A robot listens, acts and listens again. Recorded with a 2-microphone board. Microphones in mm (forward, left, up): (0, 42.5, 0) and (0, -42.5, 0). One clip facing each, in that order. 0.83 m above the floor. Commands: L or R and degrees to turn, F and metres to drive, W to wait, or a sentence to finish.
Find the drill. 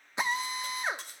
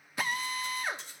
L25
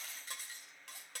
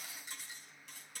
W
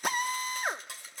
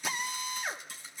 L130
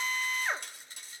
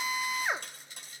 R10
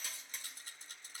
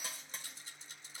W
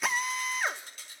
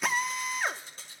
Facing the drill, under 1 m away.